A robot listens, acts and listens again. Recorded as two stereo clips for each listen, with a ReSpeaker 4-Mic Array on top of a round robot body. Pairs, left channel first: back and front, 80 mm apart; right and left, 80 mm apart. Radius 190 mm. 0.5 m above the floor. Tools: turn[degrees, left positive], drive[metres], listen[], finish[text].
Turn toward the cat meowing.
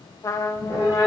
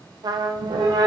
Thought: The cat meowing: 65° left.
Action: turn[65]
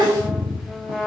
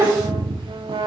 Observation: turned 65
Thought: The cat meowing is now 35° left.
Action: turn[35]
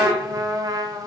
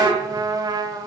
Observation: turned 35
Action: listen[]
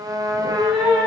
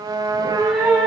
Action: finish[Found it: a cat meowing, straight ahead, over 4 m away.]